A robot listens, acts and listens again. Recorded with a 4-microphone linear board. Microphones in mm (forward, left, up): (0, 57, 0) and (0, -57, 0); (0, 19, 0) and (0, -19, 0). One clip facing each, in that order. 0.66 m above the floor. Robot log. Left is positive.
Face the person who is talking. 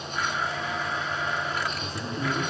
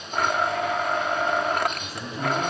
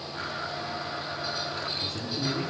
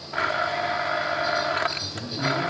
cmd yaw -30
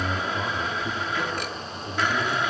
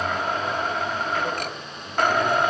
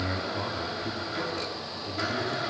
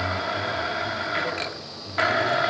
note: So it is at 25° left.
cmd yaw +25
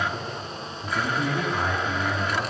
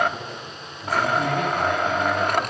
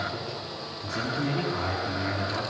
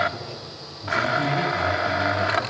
end: Facing the man speaking, over 4 m away.